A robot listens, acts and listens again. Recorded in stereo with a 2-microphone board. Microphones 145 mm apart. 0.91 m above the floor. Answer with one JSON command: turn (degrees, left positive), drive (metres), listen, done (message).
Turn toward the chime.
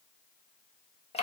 {"listen": true}
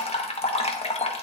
{"listen": true}
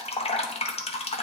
{"done": "I can't make out a chime, only dripping."}